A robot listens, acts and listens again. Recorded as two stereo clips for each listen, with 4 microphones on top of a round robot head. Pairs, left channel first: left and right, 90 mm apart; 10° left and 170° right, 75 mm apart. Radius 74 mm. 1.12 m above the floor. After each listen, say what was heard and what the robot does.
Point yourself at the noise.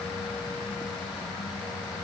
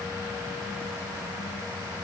Keep listening.
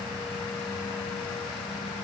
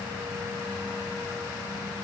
Keep listening.
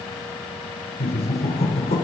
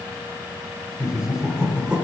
The laughter: 110° left. Turn 110° left.
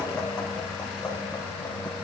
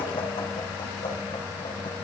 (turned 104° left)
The laughter is now 10° left. Turn 10° left.
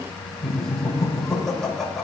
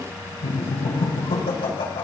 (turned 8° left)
Facing the laughter.